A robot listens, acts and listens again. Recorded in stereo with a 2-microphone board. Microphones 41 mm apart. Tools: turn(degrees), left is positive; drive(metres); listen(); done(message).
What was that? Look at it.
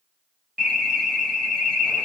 turn(degrees=30)
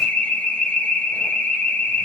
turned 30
turn(degrees=145)
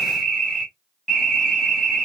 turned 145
turn(degrees=15)
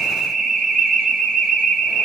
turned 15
done("Found it: an alarm, straight ahead, 2 to 4 m away.")